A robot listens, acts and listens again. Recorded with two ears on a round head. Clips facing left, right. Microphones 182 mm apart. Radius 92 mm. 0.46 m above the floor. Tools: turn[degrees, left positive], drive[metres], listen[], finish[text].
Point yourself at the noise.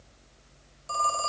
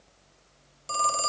Thought: The phone ringing: about 35° right or 145° right.
Action: turn[-35]
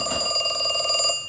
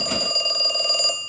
Action: finish[Found it: a phone ringing, straight ahead, under 1 m away.]